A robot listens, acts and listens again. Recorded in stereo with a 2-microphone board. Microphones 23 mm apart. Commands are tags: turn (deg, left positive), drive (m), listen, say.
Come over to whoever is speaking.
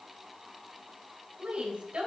<turn deg="-45"/>
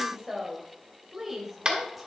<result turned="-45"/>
<drive m="1.0"/>
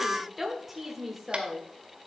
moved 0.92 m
<drive m="1.0"/>
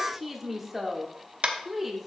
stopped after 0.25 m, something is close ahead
<say>I am next to the woman speaking.</say>